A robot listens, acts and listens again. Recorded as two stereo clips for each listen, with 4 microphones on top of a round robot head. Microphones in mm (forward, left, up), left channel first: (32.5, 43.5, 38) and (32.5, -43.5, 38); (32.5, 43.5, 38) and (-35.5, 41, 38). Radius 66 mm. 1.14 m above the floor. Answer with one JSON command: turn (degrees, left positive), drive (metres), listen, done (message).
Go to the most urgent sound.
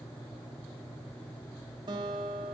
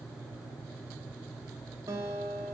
{"listen": true}
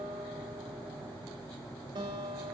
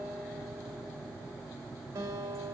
{"listen": true}
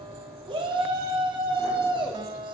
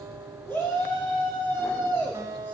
{"turn": -70}
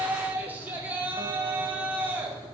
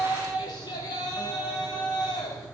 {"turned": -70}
{"turn": -20}
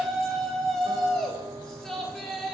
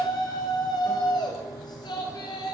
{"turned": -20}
{"drive": 1.0}
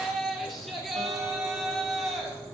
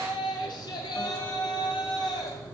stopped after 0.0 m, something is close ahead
{"done": "Something is in my way. I am facing the shout but have not reached it."}